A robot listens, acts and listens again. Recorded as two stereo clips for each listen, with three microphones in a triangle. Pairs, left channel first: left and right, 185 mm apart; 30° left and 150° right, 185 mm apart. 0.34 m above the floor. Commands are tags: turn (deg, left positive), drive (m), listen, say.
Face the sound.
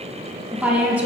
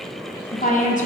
<turn deg="-10"/>
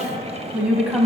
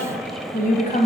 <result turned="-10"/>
<turn deg="-10"/>
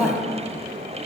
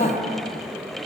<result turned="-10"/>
<say>Facing the woman speaking.</say>